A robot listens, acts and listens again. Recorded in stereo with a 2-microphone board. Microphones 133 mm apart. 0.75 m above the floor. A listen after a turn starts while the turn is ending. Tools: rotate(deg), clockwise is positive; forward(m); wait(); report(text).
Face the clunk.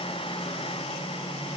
wait()
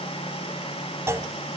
rotate(20)
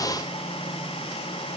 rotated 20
wait()
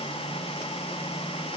report("I heard a clunk, but can't make it out now. It was about straight ahead or 140° right.")